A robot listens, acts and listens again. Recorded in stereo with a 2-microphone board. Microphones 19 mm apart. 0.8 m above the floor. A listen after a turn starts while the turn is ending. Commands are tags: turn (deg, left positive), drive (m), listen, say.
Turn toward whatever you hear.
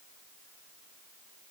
<listen/>
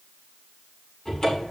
<turn deg="50"/>
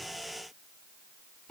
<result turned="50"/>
<listen/>
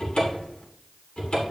<turn deg="80"/>
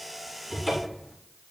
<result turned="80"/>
<turn deg="-15"/>
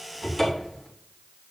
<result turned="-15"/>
<say>Facing the cupboard door, 2 to 4 m away.</say>